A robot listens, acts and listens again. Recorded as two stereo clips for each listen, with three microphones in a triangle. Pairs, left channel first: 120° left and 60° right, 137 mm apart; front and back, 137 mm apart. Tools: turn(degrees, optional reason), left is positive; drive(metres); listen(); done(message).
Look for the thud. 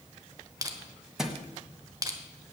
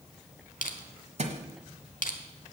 turn(degrees=-145, reason="The thud: 145° right.")
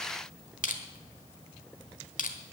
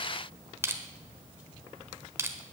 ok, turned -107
turn(degrees=-40, reason="Nothing new. It was at 40° right.")
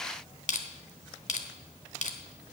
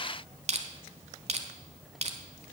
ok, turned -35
done("I heard a thud from this way, but can't make it out now.")